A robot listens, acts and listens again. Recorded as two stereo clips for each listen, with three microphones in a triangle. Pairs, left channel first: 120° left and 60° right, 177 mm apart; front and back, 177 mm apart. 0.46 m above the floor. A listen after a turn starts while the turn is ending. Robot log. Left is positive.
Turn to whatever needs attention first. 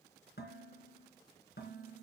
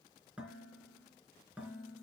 cmd idle
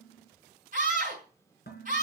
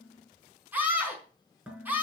note: The scream: 100° right.
cmd yaw -100
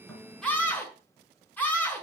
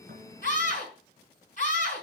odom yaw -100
note: The scream is now 40° left.
cmd yaw +40
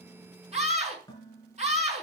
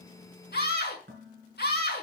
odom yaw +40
note: The scream is now 10° right.
cmd yaw -10
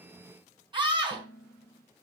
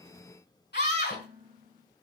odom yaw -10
end: Found it: a scream, straight ahead, over 4 m away.